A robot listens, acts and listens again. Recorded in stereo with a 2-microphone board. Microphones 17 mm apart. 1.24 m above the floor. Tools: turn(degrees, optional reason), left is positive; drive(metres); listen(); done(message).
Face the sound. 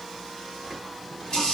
turn(degrees=60, reason="The running tap: about 60° left or 120° left.")
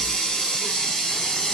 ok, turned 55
turn(degrees=65, reason="So it is at 65° left.")
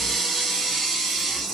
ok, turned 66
done("Facing the running tap, 2 to 4 m away.")